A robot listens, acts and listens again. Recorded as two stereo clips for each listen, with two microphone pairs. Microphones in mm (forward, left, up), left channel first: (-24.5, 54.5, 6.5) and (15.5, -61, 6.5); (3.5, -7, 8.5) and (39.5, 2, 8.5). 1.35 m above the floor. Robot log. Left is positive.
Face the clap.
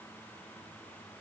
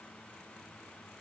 cmd idle
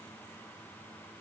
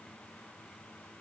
cmd idle
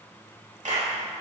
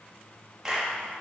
note: The clap: 60° right.
cmd yaw -60
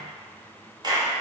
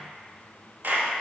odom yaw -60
note: The clap is now 20° right.
cmd yaw -20
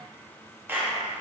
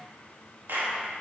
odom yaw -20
end: Found it: a clap, straight ahead, 2 to 4 m away.